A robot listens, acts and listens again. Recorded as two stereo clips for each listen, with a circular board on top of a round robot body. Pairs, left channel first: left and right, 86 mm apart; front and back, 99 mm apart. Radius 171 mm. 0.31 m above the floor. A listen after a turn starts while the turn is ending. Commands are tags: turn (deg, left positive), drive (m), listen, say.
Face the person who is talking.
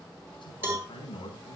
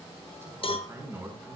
<turn deg="115"/>
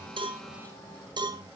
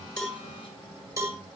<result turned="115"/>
<listen/>
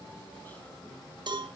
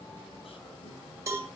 <listen/>
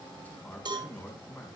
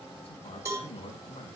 <turn deg="20"/>
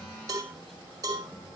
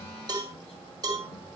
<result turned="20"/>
<listen/>
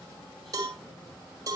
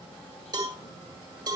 <listen/>
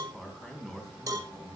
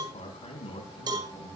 <say>Found it: a man speaking, straight ahead.</say>